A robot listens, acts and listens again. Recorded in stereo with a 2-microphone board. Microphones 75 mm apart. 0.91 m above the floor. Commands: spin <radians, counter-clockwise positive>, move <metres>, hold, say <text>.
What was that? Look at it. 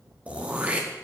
spin -0.26
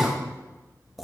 say Found it: throat clearing, straight ahead, 1 to 2 m away.